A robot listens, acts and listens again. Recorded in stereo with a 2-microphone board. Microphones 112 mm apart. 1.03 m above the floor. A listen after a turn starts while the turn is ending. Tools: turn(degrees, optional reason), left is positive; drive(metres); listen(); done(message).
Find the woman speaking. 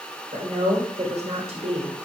turn(degrees=-70, reason="The woman speaking: about 70° right or 110° right.")
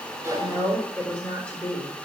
turn(degrees=15, reason="So it is at 15° left.")
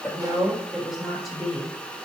done("Facing the woman speaking, 2 to 4 m away.")